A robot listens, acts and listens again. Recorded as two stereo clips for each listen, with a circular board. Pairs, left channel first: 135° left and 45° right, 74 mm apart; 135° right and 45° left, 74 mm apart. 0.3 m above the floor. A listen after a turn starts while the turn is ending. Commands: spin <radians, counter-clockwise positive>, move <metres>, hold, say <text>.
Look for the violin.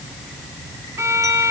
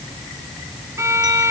say Found it: a violin, straight ahead.